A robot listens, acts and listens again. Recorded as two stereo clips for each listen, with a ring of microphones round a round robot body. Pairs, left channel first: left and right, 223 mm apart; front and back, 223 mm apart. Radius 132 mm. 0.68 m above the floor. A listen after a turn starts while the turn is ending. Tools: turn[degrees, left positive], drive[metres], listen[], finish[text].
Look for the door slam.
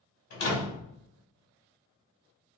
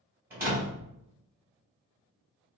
Thought: The door slam: 100° left.
Action: turn[100]
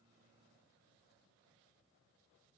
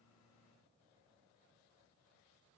Action: finish[I heard a door slam from this way, but can't make it out now.]